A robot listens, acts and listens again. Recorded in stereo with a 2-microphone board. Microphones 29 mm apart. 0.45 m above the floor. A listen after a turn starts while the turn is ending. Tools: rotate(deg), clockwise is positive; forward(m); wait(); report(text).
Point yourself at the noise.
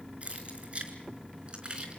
rotate(35)
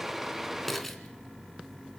rotate(-10)
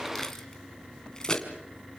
rotate(-30)
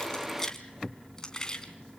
rotate(-25)
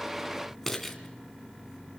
rotate(-10)
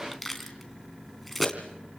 report("Found it: keys jangling, straight ahead, 2 to 4 m away.")